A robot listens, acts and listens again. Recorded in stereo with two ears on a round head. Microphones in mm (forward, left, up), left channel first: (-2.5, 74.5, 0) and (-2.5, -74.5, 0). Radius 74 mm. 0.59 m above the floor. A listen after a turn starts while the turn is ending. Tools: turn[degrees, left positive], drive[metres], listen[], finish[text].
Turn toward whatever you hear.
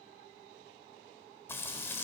Action: turn[30]
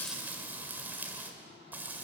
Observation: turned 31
Thought: So it is at 10° right.
Action: turn[-10]
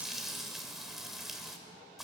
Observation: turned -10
Action: finish[Facing the frying, 2 to 4 m away.]